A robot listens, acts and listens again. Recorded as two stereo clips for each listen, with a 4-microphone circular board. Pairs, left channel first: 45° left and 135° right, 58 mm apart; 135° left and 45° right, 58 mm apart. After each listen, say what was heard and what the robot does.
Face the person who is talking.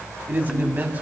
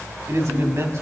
The man speaking: 75° right. Turn 75° right.
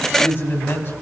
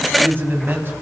Found it: a man speaking, straight ahead, 2 to 4 m away.